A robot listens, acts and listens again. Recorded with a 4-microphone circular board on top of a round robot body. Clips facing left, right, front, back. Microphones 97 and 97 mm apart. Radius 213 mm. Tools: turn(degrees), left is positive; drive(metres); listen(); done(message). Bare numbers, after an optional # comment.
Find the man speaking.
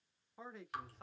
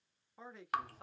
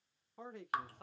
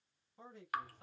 done("Found it: a man speaking, straight ahead, 1 to 2 m away.")